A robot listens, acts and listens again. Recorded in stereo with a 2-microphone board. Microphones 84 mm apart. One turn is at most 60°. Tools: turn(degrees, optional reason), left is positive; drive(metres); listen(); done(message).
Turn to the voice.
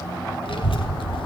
turn(degrees=60)
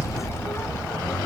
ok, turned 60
turn(degrees=35, reason="So it is at 35° left.")
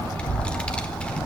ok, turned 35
turn(degrees=15, reason="The child speaking is now 15° left.")
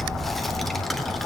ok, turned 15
done("Facing the child speaking, 1 to 2 m away.")